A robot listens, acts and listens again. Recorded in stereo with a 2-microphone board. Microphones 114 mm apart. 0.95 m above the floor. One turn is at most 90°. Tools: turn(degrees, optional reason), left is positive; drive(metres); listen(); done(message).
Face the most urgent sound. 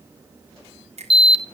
turn(degrees=45, reason="The alarm: about 45° left or 135° left.")
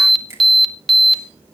done("Found it: an alarm, straight ahead.")